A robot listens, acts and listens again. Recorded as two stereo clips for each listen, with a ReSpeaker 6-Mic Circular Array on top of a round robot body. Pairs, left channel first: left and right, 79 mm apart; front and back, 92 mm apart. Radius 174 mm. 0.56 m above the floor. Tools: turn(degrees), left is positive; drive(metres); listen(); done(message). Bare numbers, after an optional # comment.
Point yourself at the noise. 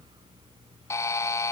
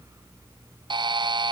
# The buzzer: 145° left.
turn(145)
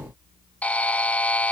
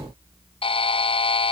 # The buzzer is now 15° left.
turn(15)
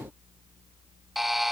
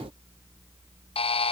done("Found it: a buzzer, straight ahead.")